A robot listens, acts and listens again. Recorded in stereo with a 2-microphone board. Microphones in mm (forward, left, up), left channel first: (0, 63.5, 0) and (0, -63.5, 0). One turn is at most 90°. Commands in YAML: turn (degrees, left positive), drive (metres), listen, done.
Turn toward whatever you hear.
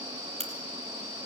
turn: -60
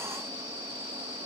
listen: true
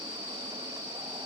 done: "I heard a crack, but can't make it out now. It was about straight ahead or 60° right."